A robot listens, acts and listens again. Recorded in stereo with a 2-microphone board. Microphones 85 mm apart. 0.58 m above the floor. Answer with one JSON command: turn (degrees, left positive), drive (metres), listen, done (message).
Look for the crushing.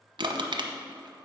{"turn": -75}
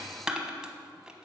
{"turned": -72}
{"turn": -10}
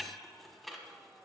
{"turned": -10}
{"done": "Found it: crushing, straight ahead, 1 to 2 m away."}